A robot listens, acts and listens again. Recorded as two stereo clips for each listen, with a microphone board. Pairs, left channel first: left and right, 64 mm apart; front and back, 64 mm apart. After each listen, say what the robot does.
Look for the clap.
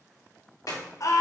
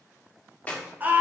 Turn 65° left.
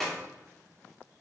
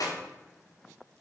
Found it: a clap, straight ahead.